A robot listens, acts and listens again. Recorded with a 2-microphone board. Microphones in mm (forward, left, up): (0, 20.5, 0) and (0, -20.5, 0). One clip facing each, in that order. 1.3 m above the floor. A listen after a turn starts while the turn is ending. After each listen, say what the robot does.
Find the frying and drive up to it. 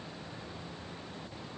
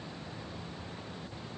Keep listening.
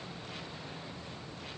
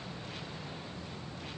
Keep listening.
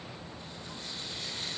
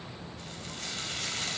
Turn 65° right.
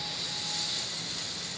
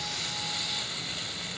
Turn 50° right.
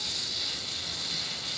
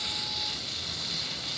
Turn 10° right.
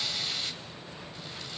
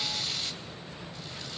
Drive 1.0 m forward.
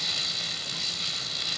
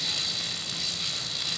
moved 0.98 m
Drive 1.0 m forward.
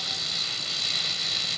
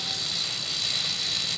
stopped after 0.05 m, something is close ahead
Arrived at the frying, straight ahead.